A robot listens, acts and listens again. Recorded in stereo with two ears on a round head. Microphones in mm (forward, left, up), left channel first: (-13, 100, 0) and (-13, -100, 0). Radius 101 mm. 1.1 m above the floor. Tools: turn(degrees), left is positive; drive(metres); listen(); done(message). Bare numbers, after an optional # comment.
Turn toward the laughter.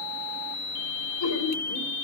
turn(90)
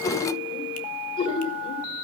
# So it is at 25° left.
turn(25)
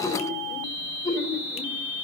# The laughter is now 15° left.
turn(15)
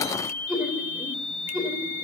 done("Facing the laughter, 2 to 4 m away.")